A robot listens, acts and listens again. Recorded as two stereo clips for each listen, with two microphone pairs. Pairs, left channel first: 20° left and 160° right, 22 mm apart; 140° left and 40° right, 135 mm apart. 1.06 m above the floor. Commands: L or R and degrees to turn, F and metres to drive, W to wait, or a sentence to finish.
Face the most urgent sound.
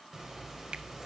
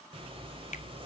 W
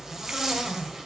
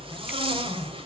W
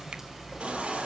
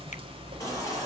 R155
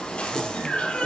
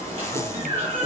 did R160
Found it: a baby crying, straight ahead, over 4 m away.